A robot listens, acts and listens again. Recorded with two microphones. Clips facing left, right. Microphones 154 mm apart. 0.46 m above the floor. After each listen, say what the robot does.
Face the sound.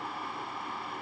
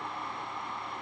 Keep listening.
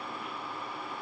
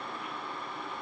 Keep listening.
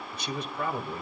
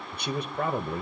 Turn 60° right.
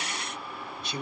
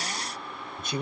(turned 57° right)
Turn 55° right.
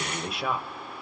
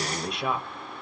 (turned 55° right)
Found it: a man speaking, straight ahead.